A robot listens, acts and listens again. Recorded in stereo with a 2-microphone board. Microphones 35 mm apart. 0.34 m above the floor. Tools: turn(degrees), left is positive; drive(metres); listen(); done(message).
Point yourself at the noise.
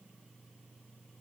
listen()
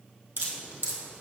turn(degrees=-90)
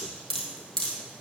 turn(degrees=15)
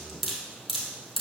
done("Found it: dripping, straight ahead, 1 to 2 m away.")